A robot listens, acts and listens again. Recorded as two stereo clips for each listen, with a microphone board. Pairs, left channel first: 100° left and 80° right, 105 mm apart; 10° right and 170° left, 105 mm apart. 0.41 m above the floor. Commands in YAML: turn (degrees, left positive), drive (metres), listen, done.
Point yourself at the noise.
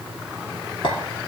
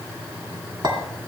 turn: 130
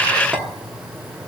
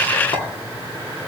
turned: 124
listen: true
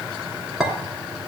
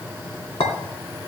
turn: 10
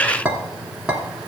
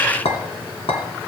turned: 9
done: "Facing the clink, 2 to 4 m away."